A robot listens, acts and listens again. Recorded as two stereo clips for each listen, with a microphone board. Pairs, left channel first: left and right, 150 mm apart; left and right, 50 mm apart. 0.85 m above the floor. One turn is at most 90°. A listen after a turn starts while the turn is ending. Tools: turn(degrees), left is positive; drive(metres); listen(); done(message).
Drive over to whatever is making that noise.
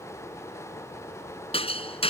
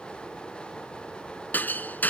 turn(degrees=40)
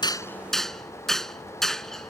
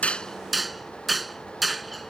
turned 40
drive(metres=1.0)
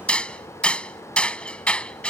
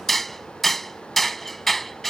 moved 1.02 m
drive(metres=1.0)
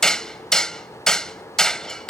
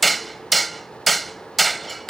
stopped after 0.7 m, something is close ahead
done("I am next to the hammering.")